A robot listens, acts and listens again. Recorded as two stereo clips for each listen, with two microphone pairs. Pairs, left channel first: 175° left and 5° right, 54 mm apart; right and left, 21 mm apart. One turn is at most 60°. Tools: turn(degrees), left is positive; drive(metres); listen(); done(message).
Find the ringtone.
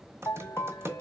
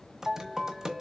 turn(degrees=60)
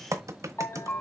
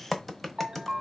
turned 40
turn(degrees=60)
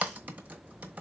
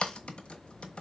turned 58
turn(degrees=60)
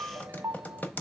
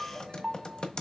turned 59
turn(degrees=25)
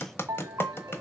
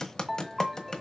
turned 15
turn(degrees=10)
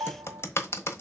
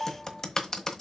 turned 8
done("Facing the ringtone, 1 to 2 m away.")